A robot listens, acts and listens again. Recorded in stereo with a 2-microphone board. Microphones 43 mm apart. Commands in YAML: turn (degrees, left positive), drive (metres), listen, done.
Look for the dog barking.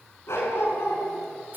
turn: 75
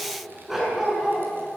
turn: -10
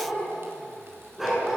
turn: -10
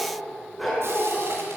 done: "Facing the dog barking."